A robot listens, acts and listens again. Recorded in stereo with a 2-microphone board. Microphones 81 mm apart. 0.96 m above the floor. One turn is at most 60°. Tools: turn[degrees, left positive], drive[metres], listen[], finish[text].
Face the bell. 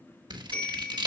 Thought: The bell: about 20° left or 160° left.
Action: turn[20]
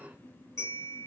Thought: So it is at 140° left.
Action: turn[60]
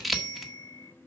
Thought: The bell is now 85° left.
Action: turn[60]
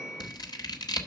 Thought: The bell is now 25° left.
Action: turn[25]
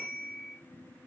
Action: finish[Found it: a bell, straight ahead, over 4 m away.]